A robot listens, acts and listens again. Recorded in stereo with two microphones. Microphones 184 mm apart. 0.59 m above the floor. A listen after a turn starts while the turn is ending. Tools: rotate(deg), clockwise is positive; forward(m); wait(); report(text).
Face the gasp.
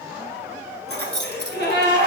rotate(-65)
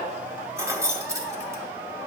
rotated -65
wait()
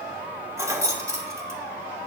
report("I heard a gasp, but can't make it out now. It was about straight ahead or 50° left.")